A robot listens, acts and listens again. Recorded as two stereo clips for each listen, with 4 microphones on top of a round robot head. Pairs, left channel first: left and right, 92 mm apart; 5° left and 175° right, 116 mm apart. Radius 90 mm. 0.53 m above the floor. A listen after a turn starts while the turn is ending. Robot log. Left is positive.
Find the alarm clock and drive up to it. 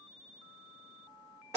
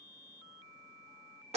cmd idle
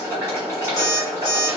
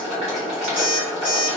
note: The alarm clock: 165° left.
cmd yaw +165
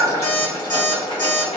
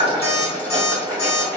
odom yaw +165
note: The alarm clock is now 35° left.
cmd yaw +35
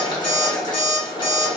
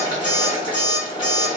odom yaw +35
cmd fwd 1.0
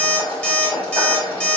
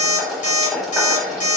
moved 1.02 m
note: The alarm clock is now 10° left.
cmd yaw +10
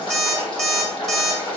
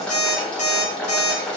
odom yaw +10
cmd fwd 1.0
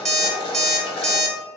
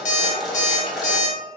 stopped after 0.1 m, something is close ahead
end: Arrived at the alarm clock, straight ahead.